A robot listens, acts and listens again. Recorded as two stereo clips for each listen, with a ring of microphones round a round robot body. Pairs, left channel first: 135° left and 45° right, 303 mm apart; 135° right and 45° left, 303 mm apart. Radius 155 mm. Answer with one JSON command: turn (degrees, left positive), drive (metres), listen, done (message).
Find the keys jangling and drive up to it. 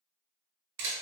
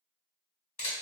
{"listen": true}
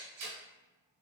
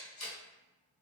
{"listen": true}
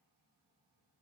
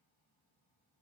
{"done": "I can't make out keys jangling, only a camera shutter."}